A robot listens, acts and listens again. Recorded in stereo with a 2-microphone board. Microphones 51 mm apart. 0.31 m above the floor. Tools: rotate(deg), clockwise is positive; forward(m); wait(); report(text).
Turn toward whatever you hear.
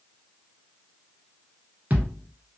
rotate(35)
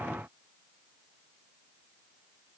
wait()
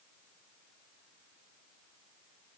report("I heard a thud, but can't make it out now. It was about straight ahead or 110° right.")